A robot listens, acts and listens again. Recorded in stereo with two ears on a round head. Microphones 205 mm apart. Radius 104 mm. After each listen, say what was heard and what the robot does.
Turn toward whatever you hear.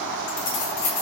Turn 90° left.
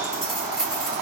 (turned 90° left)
Found it: keys jangling, straight ahead, 2 to 4 m away.